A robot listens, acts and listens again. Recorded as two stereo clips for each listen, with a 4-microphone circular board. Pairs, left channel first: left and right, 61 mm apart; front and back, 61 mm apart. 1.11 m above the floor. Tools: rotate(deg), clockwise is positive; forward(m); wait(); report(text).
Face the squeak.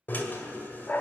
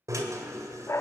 wait()
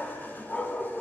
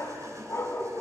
wait()
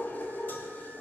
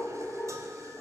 report("I can't make out a squeak, only a dog barking and a drill.")